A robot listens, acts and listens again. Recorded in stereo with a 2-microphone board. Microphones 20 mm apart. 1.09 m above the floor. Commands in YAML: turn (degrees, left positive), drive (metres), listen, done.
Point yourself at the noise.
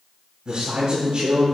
turn: -60
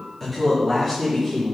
turn: 20
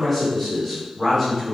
turn: 15
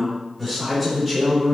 turn: 10
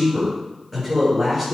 done: "Facing the man speaking, over 4 m away."